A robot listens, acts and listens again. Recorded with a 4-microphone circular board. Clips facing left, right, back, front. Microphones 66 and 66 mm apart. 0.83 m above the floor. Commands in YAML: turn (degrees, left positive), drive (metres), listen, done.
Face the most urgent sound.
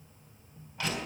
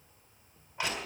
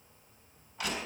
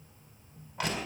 listen: true
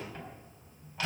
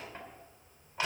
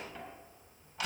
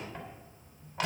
listen: true
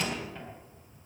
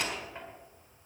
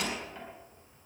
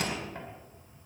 done: "I can't make out anything urgent to turn to."